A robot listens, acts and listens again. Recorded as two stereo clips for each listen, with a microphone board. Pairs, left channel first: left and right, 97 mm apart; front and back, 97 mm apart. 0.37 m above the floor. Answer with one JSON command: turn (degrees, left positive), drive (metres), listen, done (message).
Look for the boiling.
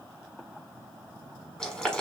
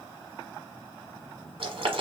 {"turn": 170}
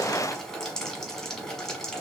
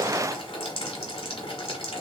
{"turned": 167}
{"done": "Found it: boiling, straight ahead."}